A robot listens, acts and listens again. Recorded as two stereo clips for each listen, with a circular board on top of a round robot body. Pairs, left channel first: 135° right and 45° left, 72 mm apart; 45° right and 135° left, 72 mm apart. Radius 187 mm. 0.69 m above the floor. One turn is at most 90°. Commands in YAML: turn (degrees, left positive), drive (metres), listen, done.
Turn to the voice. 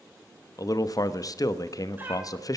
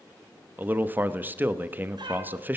turn: -90
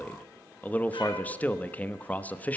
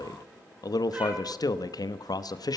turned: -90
turn: -65
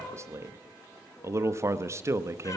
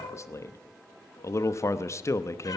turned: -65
done: "Facing the man speaking."